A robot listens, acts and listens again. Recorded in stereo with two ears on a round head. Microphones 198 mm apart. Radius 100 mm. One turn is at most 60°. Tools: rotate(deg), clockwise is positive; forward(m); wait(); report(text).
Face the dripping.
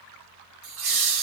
wait()
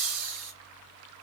wait()
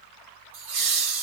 report("I can't make out dripping to turn to.")